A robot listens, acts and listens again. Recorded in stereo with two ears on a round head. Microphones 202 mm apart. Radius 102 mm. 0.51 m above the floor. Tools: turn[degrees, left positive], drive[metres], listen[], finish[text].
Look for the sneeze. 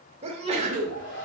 Thought: The sneeze: about 25° right or 155° right.
Action: turn[-25]
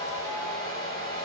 Action: listen[]
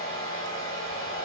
Action: finish[I heard a sneeze, but can't make it out now. It was about straight ahead or 130° right.]